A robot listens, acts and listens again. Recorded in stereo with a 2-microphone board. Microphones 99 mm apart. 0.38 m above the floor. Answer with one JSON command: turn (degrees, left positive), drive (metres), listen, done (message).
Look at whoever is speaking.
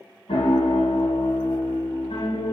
{"listen": true}
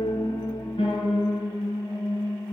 {"listen": true}
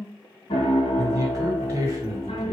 {"turn": -35}
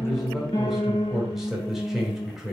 {"done": "Facing the man speaking."}